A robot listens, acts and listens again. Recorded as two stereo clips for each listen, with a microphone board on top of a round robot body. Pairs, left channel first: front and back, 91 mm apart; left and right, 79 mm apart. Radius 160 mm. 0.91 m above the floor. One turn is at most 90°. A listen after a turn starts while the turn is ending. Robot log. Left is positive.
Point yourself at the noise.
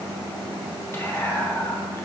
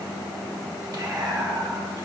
note: The whispering: 60° right.
cmd yaw -60
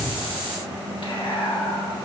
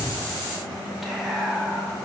end: Found it: whispering, straight ahead, 1 to 2 m away.